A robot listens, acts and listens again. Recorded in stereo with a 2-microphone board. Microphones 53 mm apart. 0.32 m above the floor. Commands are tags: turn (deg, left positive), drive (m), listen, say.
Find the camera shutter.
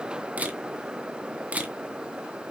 <turn deg="-30"/>
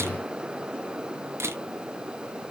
<turn deg="-120"/>
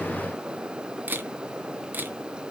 <turn deg="-40"/>
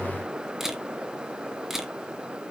<say>Facing the camera shutter.</say>